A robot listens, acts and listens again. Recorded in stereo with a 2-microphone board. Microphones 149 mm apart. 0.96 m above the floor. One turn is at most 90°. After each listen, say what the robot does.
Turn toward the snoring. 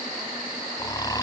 Turn 25° left.
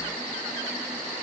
Keep listening.
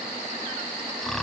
Found it: snoring, straight ahead.